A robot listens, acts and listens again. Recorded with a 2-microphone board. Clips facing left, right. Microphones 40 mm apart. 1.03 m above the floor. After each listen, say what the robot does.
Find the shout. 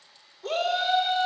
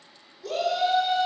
Turn 40° left.
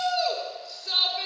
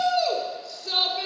Facing the shout, 2 to 4 m away.